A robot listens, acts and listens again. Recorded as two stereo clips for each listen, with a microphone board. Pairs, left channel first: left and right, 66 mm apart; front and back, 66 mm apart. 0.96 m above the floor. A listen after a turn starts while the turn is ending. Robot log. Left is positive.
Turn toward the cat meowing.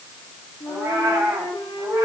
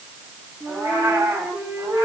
note: The cat meowing: 135° right.
cmd yaw -135
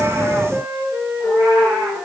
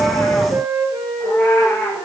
note: The cat meowing is now 55° right.
cmd yaw -55
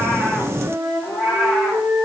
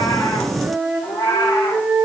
end: Found it: a cat meowing, straight ahead.